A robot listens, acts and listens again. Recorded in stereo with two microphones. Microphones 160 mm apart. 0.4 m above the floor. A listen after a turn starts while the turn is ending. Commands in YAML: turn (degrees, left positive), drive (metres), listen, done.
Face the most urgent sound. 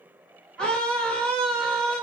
turn: 30
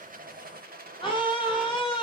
turn: 140
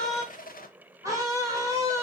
turn: -25
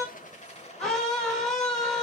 done: "Found it: a scream, straight ahead."